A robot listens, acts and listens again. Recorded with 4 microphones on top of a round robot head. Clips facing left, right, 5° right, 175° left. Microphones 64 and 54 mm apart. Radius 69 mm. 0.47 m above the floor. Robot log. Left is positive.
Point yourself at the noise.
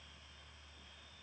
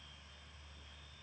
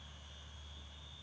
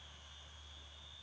cmd idle
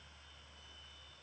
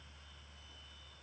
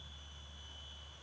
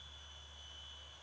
cmd idle
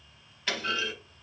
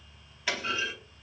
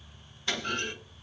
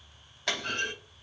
note: The clunk: 175° right.
cmd yaw -175
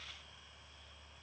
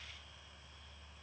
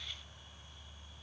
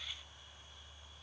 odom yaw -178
end: I heard a clunk from this way, but can't make it out now.